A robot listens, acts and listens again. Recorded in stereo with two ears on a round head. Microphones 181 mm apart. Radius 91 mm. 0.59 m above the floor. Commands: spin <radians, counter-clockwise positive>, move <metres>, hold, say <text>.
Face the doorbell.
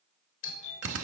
spin 1.05
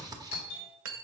spin 0.79
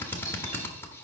hold
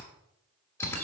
hold
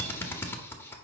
say Facing where the doorbell came from. I can't hear it now.